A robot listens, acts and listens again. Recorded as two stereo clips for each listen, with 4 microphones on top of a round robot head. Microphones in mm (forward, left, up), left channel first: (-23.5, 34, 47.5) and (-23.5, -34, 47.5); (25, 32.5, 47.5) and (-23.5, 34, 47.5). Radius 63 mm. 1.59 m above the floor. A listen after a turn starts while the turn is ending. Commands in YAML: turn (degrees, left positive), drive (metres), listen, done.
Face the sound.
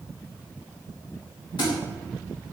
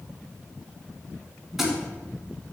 turn: 95
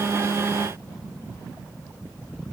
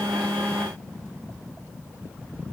done: "I heard a thud from this way, but can't make it out now."